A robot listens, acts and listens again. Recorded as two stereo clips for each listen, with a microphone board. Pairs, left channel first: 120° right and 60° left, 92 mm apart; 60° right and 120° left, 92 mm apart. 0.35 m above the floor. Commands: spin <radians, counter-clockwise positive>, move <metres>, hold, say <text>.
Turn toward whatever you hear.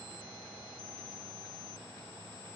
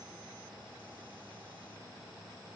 hold
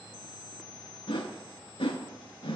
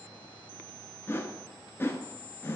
spin -2.09
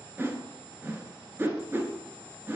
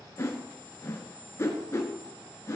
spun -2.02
say Facing the whoosh.